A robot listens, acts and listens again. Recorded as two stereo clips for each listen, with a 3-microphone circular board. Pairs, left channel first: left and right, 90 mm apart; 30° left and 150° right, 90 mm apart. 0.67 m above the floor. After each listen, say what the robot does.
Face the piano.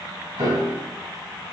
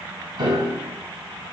Turn 130° right.
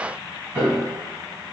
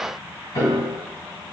Turn 25° right.
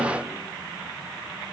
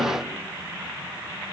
Keep listening.
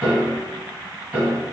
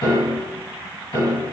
Turn 20° right.
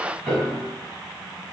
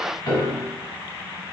Turn 10° right.
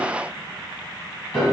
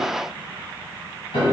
Found it: a piano, straight ahead, 1 to 2 m away.